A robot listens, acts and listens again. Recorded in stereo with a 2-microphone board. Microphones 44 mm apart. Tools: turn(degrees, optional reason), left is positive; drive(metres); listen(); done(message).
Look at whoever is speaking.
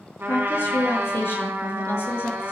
turn(degrees=60, reason="The woman speaking: about 60° left or 120° left.")
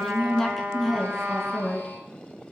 done("Found it: a woman speaking, straight ahead, over 4 m away.")